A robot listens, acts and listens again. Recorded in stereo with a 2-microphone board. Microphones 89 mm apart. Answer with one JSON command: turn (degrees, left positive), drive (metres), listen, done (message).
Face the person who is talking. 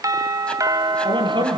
{"turn": -60}
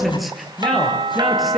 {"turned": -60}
{"done": "Found it: a man speaking, straight ahead."}